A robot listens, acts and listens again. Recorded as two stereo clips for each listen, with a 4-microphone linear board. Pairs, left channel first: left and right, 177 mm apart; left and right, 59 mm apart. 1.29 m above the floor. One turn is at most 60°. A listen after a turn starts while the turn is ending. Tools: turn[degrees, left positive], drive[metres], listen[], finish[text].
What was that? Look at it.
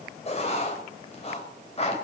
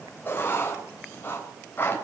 Thought: The writing: about 35° left or 145° left.
Action: turn[35]
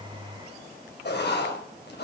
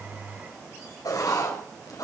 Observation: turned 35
Thought: So it is at 105° left.
Action: turn[60]
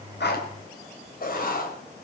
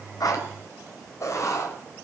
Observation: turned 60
Thought: The writing is now 55° left.
Action: turn[55]
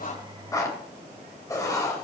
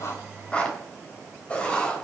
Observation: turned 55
Thought: The writing is now 20° left.
Action: turn[20]
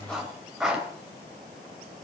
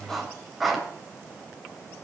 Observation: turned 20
Action: finish[Facing the writing.]